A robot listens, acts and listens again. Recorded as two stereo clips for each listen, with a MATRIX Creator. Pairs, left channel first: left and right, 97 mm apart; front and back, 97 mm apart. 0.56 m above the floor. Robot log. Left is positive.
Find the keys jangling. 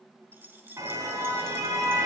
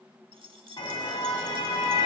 note: The keys jangling: 155° right.
cmd yaw -155
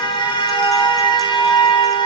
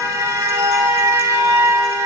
cmd idle
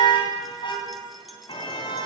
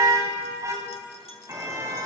cmd idle
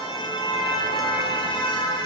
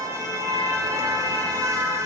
end: Facing where the keys jangling came from. I can't hear it now.